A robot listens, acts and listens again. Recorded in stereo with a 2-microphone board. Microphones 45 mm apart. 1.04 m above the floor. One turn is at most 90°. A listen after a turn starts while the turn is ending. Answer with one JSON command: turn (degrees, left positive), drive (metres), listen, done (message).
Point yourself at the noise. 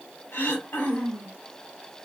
{"turn": 65}
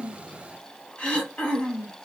{"turn": 30}
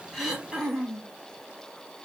{"turn": -15}
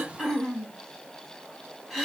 {"done": "Facing the throat clearing."}